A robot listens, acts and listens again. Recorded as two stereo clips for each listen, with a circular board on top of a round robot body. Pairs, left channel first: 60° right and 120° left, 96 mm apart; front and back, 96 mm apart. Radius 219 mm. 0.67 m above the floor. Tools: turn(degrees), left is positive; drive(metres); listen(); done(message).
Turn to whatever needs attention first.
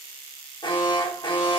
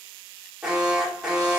turn(degrees=-100)
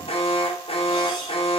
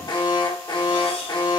turn(degrees=-45)
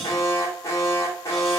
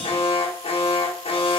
done("Found it: an alarm, straight ahead, 2 to 4 m away.")